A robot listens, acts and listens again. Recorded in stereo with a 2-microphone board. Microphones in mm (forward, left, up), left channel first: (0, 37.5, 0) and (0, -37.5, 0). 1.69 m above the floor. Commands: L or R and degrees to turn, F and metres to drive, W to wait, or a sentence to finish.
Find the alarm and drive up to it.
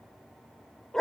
W
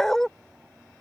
W
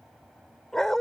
I can't make out an alarm, only a dog barking.